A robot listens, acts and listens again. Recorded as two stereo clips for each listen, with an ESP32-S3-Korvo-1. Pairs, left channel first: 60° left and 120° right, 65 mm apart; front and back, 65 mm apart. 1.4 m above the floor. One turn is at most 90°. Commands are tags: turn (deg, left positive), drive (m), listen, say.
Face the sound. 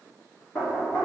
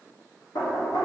<turn deg="10"/>
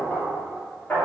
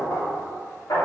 <say>Facing the knocking, 2 to 4 m away.</say>